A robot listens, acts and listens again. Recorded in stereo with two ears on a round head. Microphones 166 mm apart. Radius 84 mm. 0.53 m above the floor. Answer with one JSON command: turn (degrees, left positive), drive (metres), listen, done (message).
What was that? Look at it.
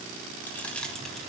{"turn": 30}
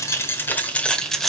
{"turn": 30}
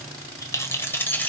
{"turn": 30}
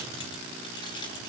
{"turn": 155}
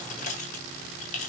{"turn": 40}
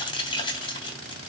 {"turn": 25}
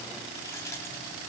{"turn": 15}
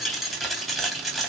{"done": "Found it: keys jangling, straight ahead."}